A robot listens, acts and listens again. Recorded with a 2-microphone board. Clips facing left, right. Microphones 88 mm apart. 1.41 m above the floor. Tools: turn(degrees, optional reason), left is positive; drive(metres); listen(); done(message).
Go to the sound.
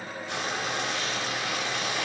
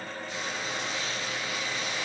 turn(degrees=75, reason="The frying: about 75° left or 105° left.")
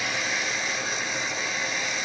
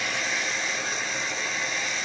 drive(metres=1.0)
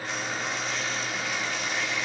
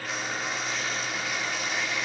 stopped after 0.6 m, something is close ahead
done("Something is in my way. I am facing the frying but have not reached it.")